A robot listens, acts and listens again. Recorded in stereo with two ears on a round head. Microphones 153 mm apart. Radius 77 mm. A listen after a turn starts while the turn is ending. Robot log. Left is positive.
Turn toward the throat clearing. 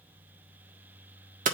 cmd idle
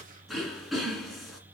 cmd yaw +30
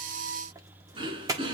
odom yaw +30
note: So it is at 30° right.
cmd yaw -30
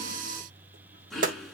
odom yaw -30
end: Found it: throat clearing, straight ahead.